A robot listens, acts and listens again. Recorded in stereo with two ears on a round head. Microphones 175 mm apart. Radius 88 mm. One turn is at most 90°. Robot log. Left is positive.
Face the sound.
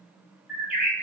cmd yaw -30
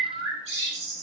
note: So it is at 140° right.
cmd yaw -90
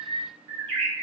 note: The bird is now 30° right.
cmd yaw -30
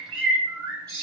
note: The bird is now 20° right.
cmd yaw -20
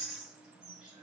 end: Found it: a bird, straight ahead, 1 to 2 m away.